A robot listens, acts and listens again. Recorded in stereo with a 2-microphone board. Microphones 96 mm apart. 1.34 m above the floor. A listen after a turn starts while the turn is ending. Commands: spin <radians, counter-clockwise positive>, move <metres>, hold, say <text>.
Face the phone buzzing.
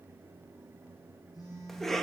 spin 0.70
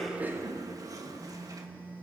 spin 1.66
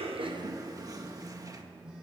say Facing the phone buzzing, 2 to 4 m away.